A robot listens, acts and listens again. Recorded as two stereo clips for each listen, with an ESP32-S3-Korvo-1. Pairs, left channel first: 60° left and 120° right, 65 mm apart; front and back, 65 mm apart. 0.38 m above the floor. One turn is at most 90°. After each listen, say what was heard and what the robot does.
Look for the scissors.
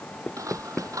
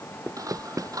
The scissors: 155° right. Turn 90° right.
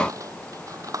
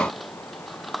The scissors is now 90° right. Turn 90° right.
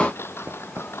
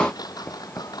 Found it: scissors, straight ahead.